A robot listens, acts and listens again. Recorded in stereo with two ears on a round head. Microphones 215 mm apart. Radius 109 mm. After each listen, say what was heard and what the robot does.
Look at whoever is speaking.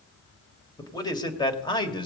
The man speaking: about 20° left or 160° left. Turn 20° left.
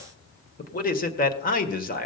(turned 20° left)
The man speaking: about 40° left or 140° left. Turn 40° left.
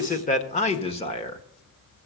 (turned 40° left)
The man speaking: about 20° left or 160° left. Turn 20° left.
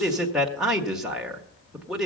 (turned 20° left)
Facing the man speaking.